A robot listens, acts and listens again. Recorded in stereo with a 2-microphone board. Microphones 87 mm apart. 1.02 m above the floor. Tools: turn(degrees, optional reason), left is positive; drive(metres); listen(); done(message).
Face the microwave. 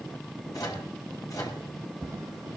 turn(degrees=45, reason="The microwave: about 45° left or 135° left.")
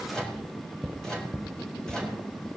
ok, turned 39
turn(degrees=10, reason="So it is at 10° left.")
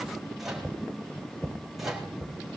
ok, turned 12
done("Facing the microwave.")